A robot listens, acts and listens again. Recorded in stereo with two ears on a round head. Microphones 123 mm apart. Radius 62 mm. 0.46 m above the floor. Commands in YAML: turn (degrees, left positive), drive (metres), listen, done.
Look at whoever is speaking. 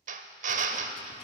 listen: true
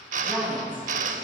turn: -30
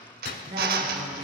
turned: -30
turn: -135
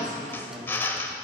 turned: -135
turn: -30
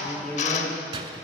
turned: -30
turn: 10
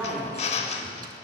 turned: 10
done: "Facing the woman speaking."